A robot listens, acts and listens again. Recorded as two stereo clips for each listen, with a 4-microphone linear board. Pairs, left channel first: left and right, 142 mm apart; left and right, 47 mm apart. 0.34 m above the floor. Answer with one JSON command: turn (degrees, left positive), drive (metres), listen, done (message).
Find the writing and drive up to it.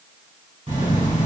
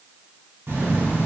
{"turn": -60}
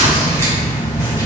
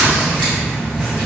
{"turn": -20}
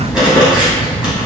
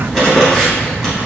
{"drive": 1.0}
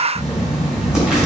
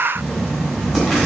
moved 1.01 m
{"drive": 1.0}
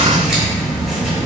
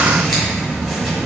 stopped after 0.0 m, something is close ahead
{"done": "Arrived at the writing, straight ahead."}